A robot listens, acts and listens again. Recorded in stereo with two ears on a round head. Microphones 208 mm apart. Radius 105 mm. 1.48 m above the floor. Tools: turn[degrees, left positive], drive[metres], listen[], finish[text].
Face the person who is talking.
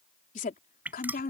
Thought: The woman speaking: about 40° left or 140° left.
Action: turn[40]
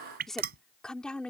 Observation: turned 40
Action: finish[Found it: a woman speaking, straight ahead.]